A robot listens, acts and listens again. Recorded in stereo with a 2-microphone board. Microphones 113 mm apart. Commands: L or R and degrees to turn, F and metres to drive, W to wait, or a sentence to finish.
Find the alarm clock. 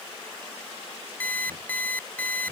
L15
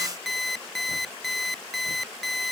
Found it: an alarm clock, straight ahead.